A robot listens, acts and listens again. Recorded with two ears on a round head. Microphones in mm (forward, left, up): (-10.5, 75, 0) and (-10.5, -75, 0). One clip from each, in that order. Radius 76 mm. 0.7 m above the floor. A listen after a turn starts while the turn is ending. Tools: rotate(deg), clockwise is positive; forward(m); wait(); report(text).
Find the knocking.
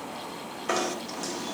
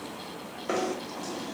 rotate(-50)
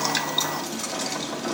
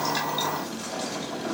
rotate(-60)
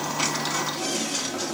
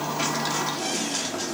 rotate(-10)
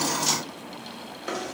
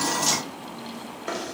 report("Facing the knocking.")